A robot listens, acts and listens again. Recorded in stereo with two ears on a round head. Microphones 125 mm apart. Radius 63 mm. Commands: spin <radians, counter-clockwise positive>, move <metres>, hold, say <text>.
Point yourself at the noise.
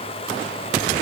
hold
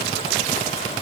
hold
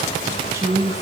spin -0.44
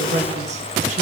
spin -2.27
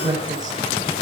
spin -0.52
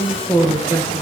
spin 0.44
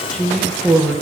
say Facing the woman speaking.